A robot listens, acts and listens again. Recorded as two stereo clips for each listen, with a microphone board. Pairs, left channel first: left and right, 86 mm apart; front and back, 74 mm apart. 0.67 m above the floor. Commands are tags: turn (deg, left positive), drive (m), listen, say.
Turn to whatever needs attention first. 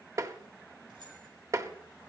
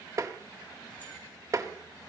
<listen/>
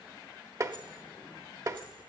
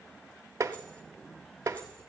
<listen/>
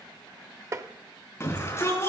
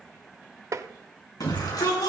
<turn deg="35"/>
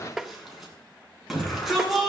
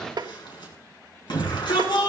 <say>Facing the shout.</say>